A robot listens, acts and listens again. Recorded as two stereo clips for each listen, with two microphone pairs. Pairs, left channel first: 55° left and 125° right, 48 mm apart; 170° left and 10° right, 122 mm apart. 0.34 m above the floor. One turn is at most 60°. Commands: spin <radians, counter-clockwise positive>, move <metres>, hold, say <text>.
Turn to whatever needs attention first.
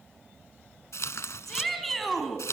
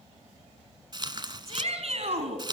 spin -0.52
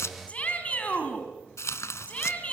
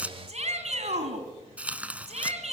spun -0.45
say Facing the shout, 2 to 4 m away.